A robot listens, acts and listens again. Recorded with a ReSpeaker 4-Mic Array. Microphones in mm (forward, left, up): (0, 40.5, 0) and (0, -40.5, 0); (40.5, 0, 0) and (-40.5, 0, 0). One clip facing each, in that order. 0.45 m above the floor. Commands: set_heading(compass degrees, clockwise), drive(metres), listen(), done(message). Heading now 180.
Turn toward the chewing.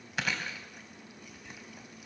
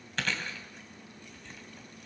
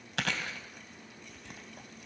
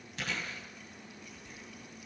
set_heading(170)
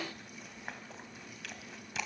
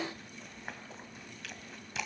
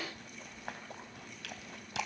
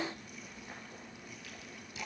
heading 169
done("Found it: chewing, straight ahead, 2 to 4 m away.")